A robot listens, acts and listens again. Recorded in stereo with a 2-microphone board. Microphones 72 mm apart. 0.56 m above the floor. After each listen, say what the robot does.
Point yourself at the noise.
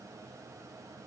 Keep listening.
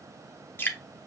Turn 30° left.
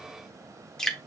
Turn 10° left.
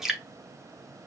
Facing the dripping.